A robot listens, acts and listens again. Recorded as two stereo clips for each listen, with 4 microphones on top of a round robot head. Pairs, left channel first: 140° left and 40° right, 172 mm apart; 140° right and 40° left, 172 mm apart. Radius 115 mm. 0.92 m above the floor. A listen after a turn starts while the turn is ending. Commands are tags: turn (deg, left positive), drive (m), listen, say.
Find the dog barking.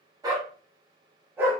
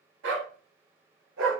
<turn deg="40"/>
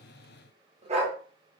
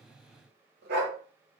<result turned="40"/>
<turn deg="15"/>
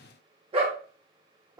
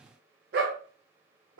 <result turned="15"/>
<turn deg="35"/>
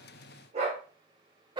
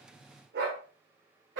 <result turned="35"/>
<turn deg="25"/>
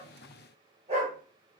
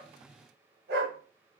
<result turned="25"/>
<turn deg="15"/>
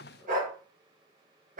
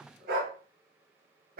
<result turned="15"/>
<say>Facing the dog barking.</say>